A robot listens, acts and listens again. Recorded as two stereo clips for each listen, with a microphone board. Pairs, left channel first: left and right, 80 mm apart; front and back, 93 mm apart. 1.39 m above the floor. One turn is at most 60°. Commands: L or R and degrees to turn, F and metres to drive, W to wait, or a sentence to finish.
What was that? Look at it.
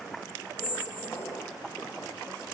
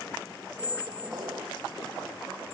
L60
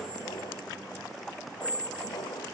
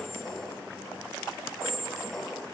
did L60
L60
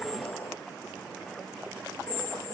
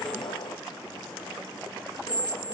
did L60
L25
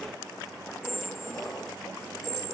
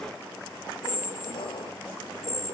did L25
Found it: a squeak, straight ahead, 2 to 4 m away.